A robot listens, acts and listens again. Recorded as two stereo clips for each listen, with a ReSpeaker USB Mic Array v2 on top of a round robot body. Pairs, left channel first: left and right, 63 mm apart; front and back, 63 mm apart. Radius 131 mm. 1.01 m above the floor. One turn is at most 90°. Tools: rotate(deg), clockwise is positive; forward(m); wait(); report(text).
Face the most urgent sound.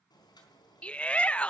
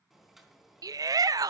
rotate(-90)
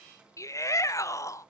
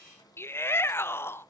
rotate(-50)
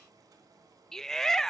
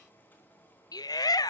report("Found it: a shout, straight ahead, under 1 m away.")